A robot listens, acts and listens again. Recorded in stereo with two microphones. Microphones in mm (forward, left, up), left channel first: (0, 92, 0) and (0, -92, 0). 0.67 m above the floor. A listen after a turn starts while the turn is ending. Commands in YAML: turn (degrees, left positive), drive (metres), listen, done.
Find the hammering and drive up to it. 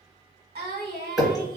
turn: 30
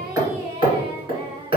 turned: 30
turn: -30
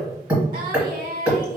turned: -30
turn: -10
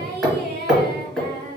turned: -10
drive: 1.0
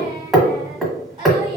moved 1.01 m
drive: 1.0
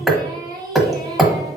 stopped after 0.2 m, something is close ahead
done: "Arrived at the hammering, straight ahead."